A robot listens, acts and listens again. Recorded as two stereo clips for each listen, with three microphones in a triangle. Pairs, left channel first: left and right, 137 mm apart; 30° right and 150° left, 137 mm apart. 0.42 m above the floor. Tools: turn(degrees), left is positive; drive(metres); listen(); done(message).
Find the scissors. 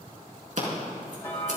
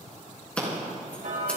turn(degrees=-110)
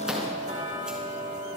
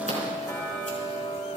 listen()
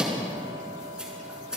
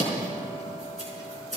done("Found it: scissors, straight ahead, over 4 m away.")